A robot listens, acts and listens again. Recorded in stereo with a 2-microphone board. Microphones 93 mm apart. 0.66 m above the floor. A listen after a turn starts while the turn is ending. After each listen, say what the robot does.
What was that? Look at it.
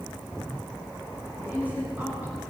Turn 15° right.
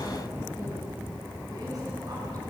Keep listening.
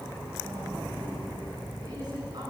Turn 130° right.
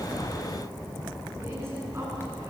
Turn 30° right.
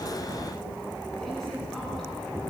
Keep listening.
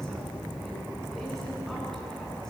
Keep listening.
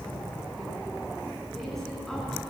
Facing where the woman speaking came from. I can't hear it now.